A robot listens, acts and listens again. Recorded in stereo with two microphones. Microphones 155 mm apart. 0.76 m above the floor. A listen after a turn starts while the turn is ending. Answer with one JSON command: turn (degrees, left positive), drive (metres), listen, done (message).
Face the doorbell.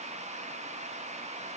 {"listen": true}
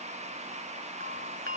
{"turn": -75}
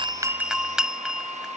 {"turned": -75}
{"done": "Facing the doorbell."}